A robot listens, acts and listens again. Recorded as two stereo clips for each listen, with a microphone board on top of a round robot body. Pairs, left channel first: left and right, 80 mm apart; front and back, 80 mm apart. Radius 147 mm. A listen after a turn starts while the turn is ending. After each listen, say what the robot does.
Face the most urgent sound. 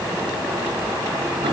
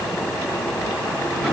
Keep listening.
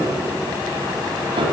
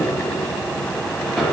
Keep listening.
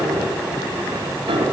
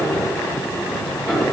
I can't make out anything urgent, only a piano.